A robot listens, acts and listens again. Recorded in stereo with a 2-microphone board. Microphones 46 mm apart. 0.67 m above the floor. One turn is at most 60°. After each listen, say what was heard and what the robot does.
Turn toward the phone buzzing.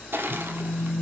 Turn 30° left.
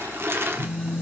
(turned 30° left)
So it is at 150° left. Turn 60° left.
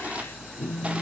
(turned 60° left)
The phone buzzing is now 100° left. Turn 60° left.
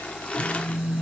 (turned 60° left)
The phone buzzing is now 40° left. Turn 40° left.
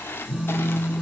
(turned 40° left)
Facing the phone buzzing, 2 to 4 m away.